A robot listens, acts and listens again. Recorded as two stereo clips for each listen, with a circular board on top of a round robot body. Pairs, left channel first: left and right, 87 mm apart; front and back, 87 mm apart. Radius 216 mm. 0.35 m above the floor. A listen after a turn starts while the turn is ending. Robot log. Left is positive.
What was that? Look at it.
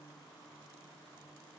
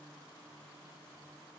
cmd idle
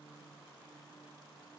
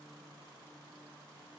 cmd idle
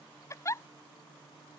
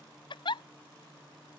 note: The giggle: 30° left.
cmd yaw +30
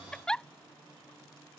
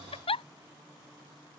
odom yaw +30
note: The giggle is now 10° left.
cmd yaw +10
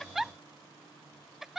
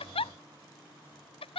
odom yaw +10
end: Facing the giggle.